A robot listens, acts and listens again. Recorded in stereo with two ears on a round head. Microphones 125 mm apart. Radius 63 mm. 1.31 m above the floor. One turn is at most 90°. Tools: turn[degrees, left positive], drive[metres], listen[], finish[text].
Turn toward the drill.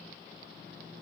Action: listen[]
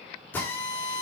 Action: turn[30]
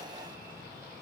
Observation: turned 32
Action: listen[]
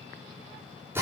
Thought: So it is at 15° right.
Action: turn[-15]
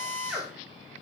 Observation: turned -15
Action: finish[Facing the drill.]